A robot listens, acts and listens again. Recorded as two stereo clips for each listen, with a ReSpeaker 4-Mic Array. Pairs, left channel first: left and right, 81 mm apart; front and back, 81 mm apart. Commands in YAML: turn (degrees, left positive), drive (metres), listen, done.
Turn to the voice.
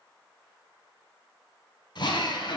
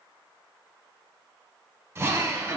listen: true
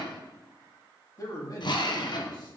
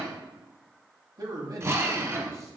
turn: 135
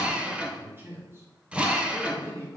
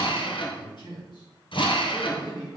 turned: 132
turn: -35
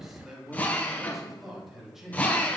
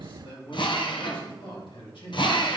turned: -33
done: "Found it: a man speaking, straight ahead."